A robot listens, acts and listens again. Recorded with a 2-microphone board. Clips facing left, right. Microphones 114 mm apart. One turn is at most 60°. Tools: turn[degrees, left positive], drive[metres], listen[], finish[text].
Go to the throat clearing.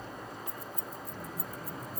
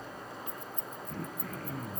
Action: turn[-60]
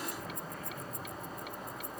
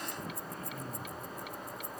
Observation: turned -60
Thought: So it is at 35° right.
Action: turn[-35]
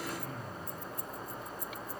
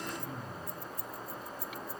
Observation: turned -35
Thought: The throat clearing is now 15° right.
Action: turn[-15]
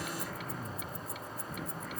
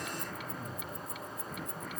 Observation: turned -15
Action: drive[1.0]
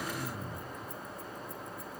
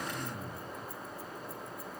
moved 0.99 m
Action: drive[1.0]
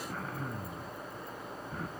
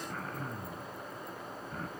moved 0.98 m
Action: drive[1.0]
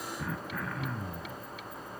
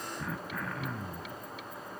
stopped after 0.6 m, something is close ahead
Action: finish[Arrived at the throat clearing, straight ahead.]